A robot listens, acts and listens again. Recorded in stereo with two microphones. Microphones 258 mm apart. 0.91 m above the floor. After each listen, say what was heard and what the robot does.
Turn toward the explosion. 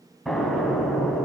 Turn 30° left.
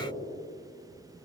Keep listening.
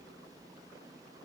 I heard an explosion, but can't make it out now. It was about 30° right or 150° left.